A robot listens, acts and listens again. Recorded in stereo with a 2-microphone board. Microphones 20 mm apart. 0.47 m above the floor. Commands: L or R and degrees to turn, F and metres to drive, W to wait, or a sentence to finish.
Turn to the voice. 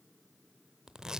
W
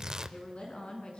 L70
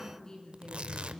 L40
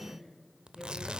L20
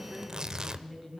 Found it: a woman speaking, straight ahead.